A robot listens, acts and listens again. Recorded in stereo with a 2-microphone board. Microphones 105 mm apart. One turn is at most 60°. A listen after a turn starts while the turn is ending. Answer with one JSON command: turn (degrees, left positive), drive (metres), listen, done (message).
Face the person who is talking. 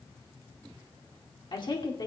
{"turn": 45}
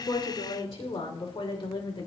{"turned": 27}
{"turn": 60}
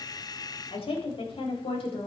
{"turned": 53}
{"turn": 60}
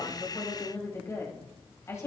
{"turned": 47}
{"turn": 30}
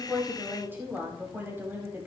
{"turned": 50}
{"turn": -20}
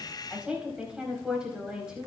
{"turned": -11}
{"turn": -10}
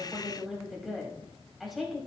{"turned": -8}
{"done": "Facing the woman speaking, over 4 m away."}